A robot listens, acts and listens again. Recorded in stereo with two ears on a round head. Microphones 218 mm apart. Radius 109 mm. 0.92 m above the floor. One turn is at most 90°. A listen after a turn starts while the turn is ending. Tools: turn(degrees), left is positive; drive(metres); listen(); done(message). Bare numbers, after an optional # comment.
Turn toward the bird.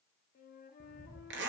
# The bird: about 30° right or 150° right.
turn(-30)
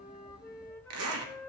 listen()
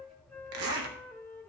done("Facing the bird, 1 to 2 m away.")